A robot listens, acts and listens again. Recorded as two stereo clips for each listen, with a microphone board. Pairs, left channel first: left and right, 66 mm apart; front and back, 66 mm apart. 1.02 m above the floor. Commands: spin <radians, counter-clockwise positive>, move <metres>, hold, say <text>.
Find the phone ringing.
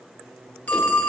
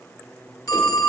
spin 0.44
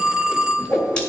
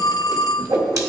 spin -0.17
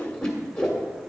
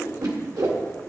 hold
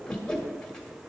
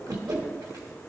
hold
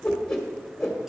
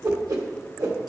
say I heard a phone ringing from this way, but can't make it out now.